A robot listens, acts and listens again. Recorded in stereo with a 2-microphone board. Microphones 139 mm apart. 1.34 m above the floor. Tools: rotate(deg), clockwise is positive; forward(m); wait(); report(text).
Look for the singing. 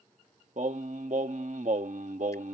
rotate(65)
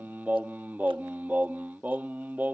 rotate(15)
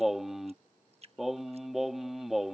report("Found it: singing, straight ahead.")